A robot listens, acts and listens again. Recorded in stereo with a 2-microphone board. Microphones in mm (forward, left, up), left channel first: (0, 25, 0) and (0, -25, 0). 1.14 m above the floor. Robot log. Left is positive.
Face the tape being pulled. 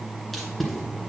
cmd yaw +30
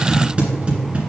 note: So it is at 25° right.
cmd yaw -25
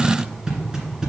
note: The tape being pulled is now 15° right.
cmd yaw -15
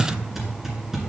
end: Found it: tape being pulled, straight ahead.